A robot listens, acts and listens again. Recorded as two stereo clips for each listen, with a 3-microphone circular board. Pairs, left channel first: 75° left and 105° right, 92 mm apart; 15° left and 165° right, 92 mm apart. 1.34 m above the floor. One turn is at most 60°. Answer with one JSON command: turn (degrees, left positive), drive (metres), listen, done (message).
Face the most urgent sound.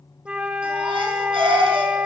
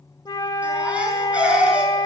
{"turn": -60}
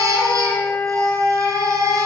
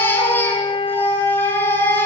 {"turn": -50}
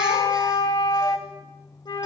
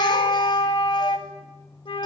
{"listen": true}
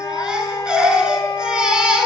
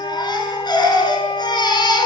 {"turn": -25}
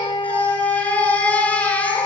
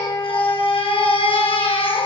{"done": "Found it: a baby crying, straight ahead, over 4 m away."}